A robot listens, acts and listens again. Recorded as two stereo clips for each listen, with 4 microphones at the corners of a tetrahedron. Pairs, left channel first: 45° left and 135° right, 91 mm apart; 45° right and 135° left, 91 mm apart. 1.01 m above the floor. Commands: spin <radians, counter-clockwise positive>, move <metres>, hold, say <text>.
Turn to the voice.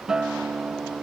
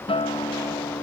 hold
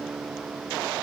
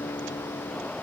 hold
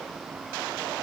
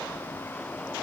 say I can't make out anyone speaking, only a guitar.